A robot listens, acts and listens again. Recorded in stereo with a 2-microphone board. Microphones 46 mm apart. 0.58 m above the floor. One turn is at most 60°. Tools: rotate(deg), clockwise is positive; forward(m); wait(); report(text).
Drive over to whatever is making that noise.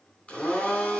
rotate(-25)
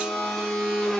forward(1.0)
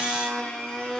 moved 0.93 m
rotate(-15)
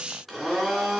forward(1.0)
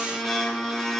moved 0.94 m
forward(1.0)
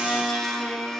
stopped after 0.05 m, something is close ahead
report("I am next to the blender.")